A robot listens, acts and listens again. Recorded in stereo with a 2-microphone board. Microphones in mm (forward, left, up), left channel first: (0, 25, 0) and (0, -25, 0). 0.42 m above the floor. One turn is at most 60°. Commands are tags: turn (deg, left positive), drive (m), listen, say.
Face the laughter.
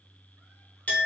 <listen/>
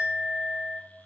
<listen/>
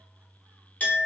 <say>I can't make out laughter to turn to.</say>